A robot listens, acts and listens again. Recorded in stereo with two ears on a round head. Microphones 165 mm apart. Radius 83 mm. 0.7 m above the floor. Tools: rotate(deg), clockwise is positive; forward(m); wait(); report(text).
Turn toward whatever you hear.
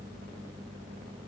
wait()
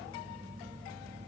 wait()
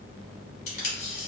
rotate(-40)
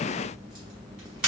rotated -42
report("Found it: tape being pulled, straight ahead, 1 to 2 m away.")